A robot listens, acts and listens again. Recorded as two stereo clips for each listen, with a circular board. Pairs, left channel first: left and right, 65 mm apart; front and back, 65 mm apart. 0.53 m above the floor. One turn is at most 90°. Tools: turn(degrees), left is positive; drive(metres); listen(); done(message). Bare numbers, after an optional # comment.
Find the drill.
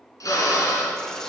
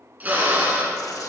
# The drill: 115° left.
turn(90)
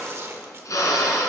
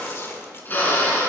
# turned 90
# The drill is now 60° left.
turn(60)
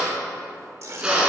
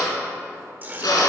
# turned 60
# The drill is now 15° right.
turn(-15)
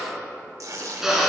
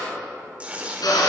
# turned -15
done("Facing the drill, 2 to 4 m away.")